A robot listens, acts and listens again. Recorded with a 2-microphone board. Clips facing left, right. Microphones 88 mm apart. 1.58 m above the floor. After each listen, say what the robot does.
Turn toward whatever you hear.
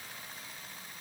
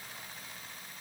Keep listening.
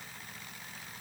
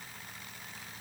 Keep listening.
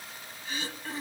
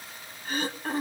Turn 45° right.
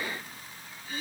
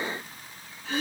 Turn 90° right.
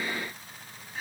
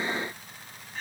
Found it: throat clearing, straight ahead, 1 to 2 m away.